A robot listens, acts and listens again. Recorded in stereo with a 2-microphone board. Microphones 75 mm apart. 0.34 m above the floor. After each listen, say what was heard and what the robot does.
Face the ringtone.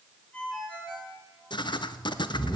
Turn 30° left.
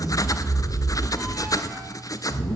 Keep listening.
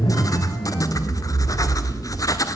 Keep listening.
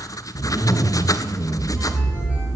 I heard a ringtone, but can't make it out now. It was about 20° right or 140° left.